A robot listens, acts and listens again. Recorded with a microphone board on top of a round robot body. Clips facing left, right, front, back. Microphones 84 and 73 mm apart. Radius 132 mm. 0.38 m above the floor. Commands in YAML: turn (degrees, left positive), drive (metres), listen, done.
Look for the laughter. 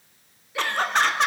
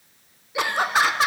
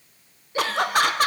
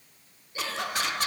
done: "Facing the laughter."